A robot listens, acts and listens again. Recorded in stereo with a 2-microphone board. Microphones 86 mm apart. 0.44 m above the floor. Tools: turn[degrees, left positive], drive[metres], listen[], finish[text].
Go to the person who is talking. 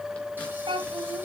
Action: turn[-90]
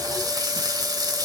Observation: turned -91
Action: listen[]
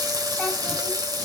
Action: listen[]
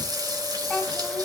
Thought: The child speaking is now 10° left.
Action: turn[10]
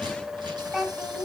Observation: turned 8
Action: drive[1.0]
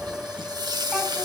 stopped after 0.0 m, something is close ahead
Action: listen[]
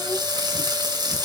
Action: listen[]
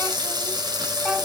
Action: finish[I heard a child speaking from this way, but can't make it out now. I did not reach it.]